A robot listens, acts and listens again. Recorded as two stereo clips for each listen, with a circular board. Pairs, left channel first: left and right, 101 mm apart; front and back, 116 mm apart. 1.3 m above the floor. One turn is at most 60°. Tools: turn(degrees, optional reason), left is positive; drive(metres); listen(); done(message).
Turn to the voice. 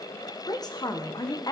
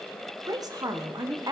turn(degrees=60, reason="The woman speaking: 130° left.")
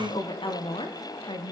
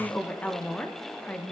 turn(degrees=60, reason="The woman speaking is now 75° left.")
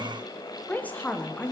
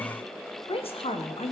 turn(degrees=20, reason="The woman speaking is now 20° left.")
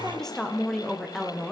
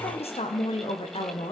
done("Facing the woman speaking, 1 to 2 m away.")